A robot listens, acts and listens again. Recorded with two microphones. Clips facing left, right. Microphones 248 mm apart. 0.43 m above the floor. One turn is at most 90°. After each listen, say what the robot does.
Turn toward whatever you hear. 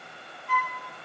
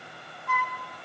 Turn 90° right.
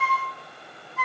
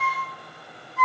Facing the flute.